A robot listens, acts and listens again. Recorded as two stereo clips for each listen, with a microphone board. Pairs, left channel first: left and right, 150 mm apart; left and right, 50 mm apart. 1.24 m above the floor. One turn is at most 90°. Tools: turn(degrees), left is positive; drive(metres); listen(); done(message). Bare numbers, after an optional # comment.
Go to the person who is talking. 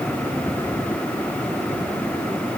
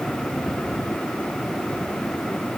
listen()
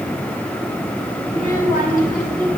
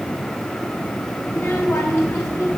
# The child speaking: about 70° left or 110° left.
turn(70)
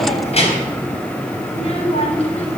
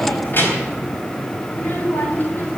# So it is at 45° left.
turn(45)
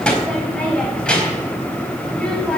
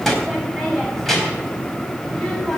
drive(1.0)
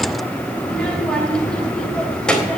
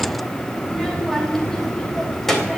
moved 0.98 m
drive(1.0)
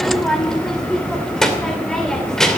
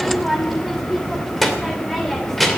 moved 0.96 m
drive(1.0)
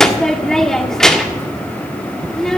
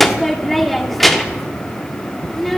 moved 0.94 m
drive(1.0)
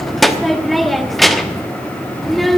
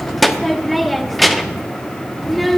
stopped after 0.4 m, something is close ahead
done("Arrived at the child speaking, straight ahead.")